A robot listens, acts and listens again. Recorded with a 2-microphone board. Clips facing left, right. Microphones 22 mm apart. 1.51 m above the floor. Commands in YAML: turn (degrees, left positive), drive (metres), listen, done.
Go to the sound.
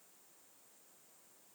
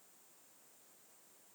listen: true
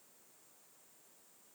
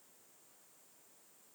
listen: true
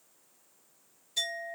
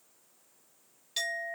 turn: -90
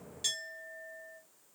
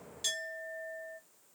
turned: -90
drive: 1.0
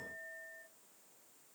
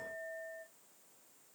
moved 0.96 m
turn: -10
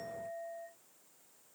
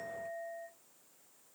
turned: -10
drive: 1.0
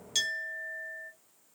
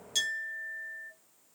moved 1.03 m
drive: 1.0
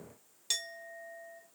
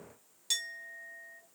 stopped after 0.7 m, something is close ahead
done: "I am next to the clink."